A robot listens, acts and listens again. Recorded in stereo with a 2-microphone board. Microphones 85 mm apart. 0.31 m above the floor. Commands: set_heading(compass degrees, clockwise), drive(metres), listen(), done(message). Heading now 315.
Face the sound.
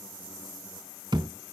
set_heading(20)
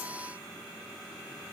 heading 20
listen()
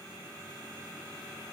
done("I heard a thud, but can't make it out now. It was about straight ahead or 50° right.")